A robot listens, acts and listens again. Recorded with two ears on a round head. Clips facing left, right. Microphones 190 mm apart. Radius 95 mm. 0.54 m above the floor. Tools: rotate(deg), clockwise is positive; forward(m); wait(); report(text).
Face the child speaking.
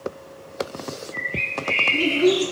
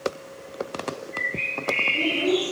rotate(-90)
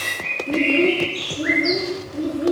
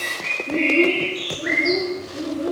rotate(-20)
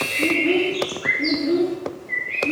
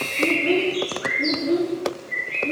report("Facing the child speaking.")